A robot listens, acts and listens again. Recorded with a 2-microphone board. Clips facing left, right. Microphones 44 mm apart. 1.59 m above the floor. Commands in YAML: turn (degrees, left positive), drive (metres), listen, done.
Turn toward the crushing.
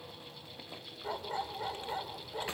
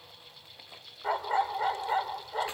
listen: true
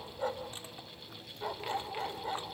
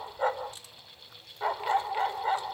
listen: true
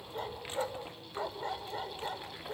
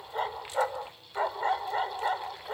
done: "I can't make out crushing, only a dog barking."